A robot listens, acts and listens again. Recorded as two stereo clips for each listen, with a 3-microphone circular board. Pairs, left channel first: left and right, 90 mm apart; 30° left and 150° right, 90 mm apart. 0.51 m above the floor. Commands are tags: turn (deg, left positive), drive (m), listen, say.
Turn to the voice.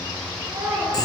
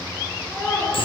<turn deg="-30"/>
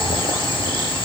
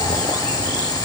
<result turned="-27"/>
<listen/>
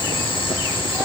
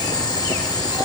<listen/>
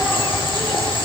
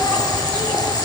<say>Facing where the child speaking came from. I can't hear it now.</say>